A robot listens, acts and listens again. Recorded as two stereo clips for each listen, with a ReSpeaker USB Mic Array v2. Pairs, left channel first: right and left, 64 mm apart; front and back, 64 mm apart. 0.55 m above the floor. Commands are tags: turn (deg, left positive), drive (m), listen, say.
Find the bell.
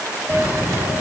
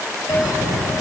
<turn deg="25"/>
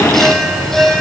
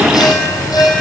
<say>Found it: a bell, straight ahead, over 4 m away.</say>